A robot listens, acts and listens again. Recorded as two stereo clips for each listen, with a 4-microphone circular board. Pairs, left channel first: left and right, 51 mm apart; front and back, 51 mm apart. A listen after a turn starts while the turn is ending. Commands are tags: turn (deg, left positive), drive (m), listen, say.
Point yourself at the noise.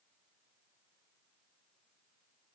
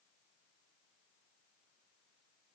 <listen/>
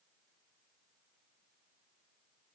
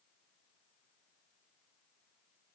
<listen/>
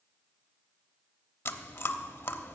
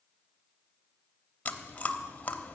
<turn deg="55"/>
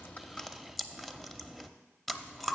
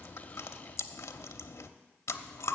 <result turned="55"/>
<say>Facing the chewing.</say>